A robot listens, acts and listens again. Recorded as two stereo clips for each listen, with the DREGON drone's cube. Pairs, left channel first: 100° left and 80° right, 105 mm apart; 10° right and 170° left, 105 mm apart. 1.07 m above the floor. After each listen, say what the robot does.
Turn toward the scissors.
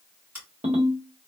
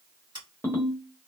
Turn 145° right.
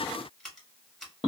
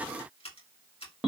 Turn 15° left.
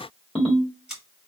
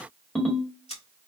Found it: scissors, straight ahead.